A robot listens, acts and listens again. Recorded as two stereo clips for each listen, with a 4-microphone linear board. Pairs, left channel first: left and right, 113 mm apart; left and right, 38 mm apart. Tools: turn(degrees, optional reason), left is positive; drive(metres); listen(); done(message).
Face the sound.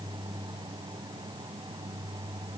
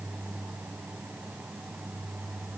listen()
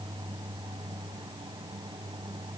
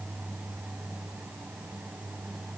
listen()
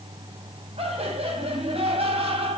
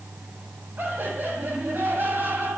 turn(degrees=-75, reason="The laughter: about 75° right or 105° right.")
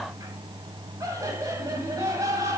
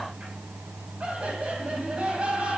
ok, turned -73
turn(degrees=-30, reason="So it is at 30° right.")
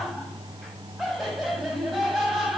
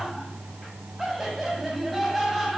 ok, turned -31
done("Found it: laughter, straight ahead, over 4 m away.")